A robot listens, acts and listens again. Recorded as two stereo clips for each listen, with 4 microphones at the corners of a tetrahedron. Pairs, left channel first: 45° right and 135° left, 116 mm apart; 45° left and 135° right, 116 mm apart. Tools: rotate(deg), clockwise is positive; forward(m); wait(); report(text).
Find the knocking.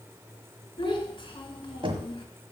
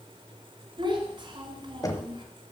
rotate(-100)
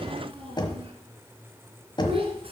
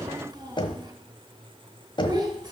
report("Facing the knocking.")